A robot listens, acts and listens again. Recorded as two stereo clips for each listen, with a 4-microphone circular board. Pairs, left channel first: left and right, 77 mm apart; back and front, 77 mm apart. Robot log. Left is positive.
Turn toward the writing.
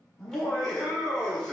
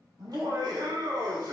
cmd idle
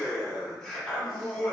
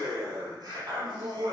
cmd idle
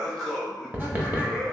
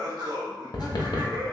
note: The writing: 155° right.
cmd yaw -155
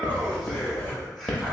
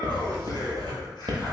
note: The writing is now 20° left.
cmd yaw +20
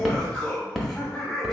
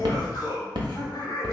end: Found it: writing, straight ahead.